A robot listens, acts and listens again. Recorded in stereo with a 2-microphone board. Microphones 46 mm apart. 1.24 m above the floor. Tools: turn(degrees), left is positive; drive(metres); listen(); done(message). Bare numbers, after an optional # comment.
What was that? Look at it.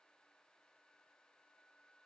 listen()
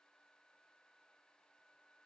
listen()
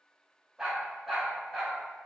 turn(30)
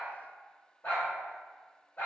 # So it is at 135° left.
turn(135)
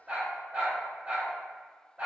# The dog barking is now 25° right.
turn(-25)
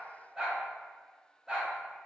# The dog barking is now 10° right.
turn(-10)
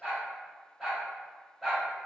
done("Facing the dog barking, 1 to 2 m away.")